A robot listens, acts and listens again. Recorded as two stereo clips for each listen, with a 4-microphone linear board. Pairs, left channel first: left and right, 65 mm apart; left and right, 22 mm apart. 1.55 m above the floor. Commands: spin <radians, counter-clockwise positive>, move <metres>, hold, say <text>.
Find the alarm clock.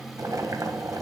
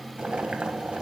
hold
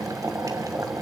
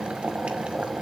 hold
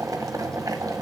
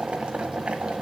say I can't make out an alarm clock to turn to.